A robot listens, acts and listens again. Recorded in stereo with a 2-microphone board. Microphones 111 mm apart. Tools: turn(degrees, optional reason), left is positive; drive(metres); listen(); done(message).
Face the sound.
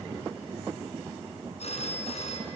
turn(degrees=70, reason="The phone ringing: about 70° left or 110° left.")
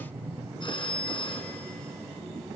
turn(degrees=45, reason="So it is at 45° left.")
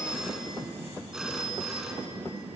done("Facing the phone ringing.")